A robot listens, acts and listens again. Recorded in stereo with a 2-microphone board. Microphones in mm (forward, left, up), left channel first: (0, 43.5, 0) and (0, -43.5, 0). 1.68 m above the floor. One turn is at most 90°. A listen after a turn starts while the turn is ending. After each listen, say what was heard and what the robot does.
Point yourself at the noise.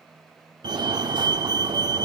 The fire alarm: about 65° right or 115° right. Turn 65° right.
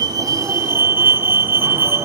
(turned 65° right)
So it is at 35° right. Turn 35° right.
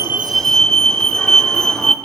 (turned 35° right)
The fire alarm is now 10° left. Turn 10° left.
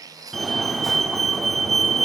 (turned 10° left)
Facing the fire alarm, under 1 m away.